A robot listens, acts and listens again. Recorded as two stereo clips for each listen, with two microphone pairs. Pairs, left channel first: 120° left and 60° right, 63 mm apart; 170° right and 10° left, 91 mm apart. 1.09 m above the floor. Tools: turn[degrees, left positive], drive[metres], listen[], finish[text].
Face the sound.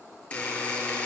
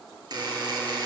Thought: The buzzer: 55° left.
Action: turn[55]
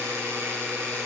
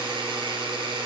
Thought: The buzzer is now 15° right.
Action: turn[-15]
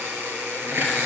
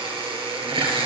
Action: finish[Facing the buzzer.]